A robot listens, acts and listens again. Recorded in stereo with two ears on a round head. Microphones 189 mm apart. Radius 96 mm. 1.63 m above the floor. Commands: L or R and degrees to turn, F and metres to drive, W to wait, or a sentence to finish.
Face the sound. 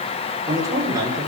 R15
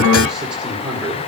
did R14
R30
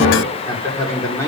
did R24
L15
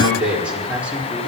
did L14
Found it: a man speaking, straight ahead, over 4 m away.